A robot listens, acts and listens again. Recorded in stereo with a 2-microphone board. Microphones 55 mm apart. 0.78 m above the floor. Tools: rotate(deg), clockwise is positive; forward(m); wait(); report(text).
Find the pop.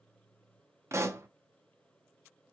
rotate(65)
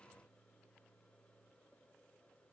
wait()
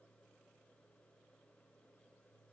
report("I heard a pop, but can't make it out now. It was about straight ahead or 50° right.")